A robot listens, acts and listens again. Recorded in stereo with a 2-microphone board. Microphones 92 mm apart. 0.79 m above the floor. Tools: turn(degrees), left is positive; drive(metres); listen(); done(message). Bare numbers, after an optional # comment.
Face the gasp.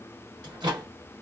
listen()
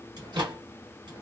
listen()
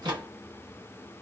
done("I can't make out a gasp, only a microwave.")